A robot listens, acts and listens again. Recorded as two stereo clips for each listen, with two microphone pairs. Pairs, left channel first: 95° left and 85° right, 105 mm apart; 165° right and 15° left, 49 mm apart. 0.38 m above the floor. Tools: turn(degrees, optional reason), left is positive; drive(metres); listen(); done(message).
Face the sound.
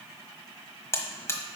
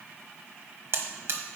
turn(degrees=35, reason="The buzzer: 35° left.")
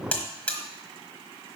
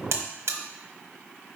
turn(degrees=20, reason="The buzzer is now 20° left.")
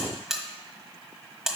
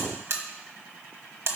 done("Found it: a buzzer, straight ahead, 1 to 2 m away.")